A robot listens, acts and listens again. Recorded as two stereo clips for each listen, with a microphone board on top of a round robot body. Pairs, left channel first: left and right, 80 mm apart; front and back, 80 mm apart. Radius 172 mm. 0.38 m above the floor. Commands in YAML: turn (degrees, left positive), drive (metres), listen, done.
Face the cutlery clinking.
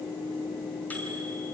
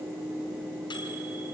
listen: true
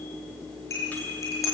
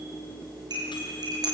turn: 145
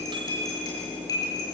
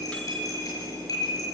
turn: 45
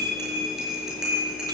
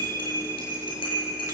done: "Found it: cutlery clinking, straight ahead."